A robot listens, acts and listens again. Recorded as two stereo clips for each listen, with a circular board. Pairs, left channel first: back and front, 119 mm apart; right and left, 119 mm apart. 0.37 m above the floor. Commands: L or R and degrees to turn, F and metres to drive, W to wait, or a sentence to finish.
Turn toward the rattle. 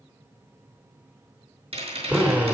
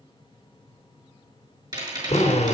L35
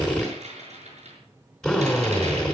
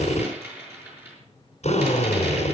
L20
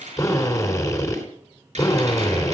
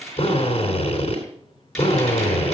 Facing the rattle.